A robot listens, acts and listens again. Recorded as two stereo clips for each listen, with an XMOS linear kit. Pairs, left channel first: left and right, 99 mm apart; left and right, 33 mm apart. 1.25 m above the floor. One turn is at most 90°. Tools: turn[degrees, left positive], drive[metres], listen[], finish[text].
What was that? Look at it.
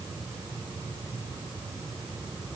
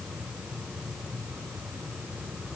Action: listen[]
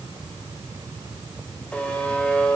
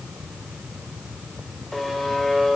Action: turn[30]
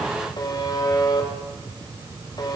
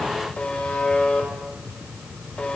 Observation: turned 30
Thought: So it is at 140° left.
Action: turn[90]
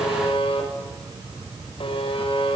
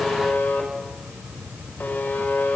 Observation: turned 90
Thought: The buzzer is now 70° left.
Action: turn[70]
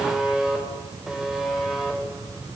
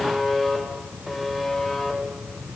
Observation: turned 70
Action: finish[Facing the buzzer, over 4 m away.]